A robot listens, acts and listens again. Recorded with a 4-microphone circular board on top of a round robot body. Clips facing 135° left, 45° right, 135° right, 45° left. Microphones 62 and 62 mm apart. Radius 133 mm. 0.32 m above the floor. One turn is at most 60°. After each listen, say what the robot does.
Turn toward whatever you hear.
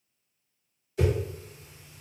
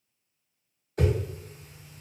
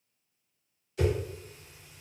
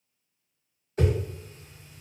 Found it: a whoosh, straight ahead, under 1 m away.